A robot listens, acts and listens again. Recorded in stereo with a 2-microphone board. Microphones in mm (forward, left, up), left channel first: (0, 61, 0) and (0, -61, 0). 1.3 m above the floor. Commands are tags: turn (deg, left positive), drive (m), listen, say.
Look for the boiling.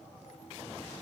<listen/>
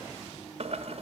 <turn deg="-55"/>
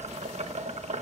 <turn deg="-70"/>
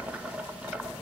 <turn deg="-10"/>
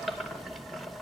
<say>Facing the boiling, 1 to 2 m away.</say>